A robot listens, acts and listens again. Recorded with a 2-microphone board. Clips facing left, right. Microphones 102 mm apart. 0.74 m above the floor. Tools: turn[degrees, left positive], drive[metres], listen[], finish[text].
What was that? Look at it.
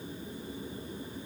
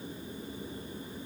Action: listen[]
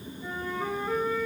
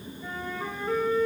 Action: turn[30]
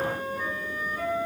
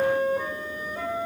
Thought: So it is at 25° right.
Action: turn[-25]
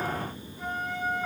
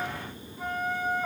Action: finish[Found it: a flute, straight ahead.]